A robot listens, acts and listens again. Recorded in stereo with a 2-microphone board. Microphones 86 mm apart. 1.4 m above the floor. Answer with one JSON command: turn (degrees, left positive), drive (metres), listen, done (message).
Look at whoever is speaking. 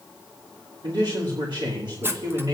{"turn": -65}
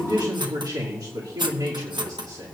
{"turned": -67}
{"turn": -50}
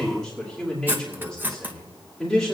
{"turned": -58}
{"turn": 10}
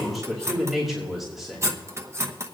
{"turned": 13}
{"done": "Facing the man speaking, 2 to 4 m away."}